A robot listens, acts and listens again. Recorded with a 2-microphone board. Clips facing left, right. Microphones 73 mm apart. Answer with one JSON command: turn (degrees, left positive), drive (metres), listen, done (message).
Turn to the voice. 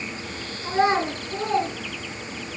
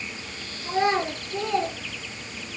{"turn": 40}
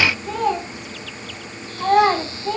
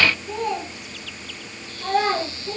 {"turn": 105}
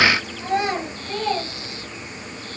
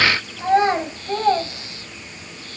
{"turn": -40}
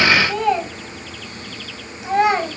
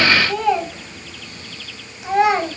{"done": "Found it: a child speaking, straight ahead."}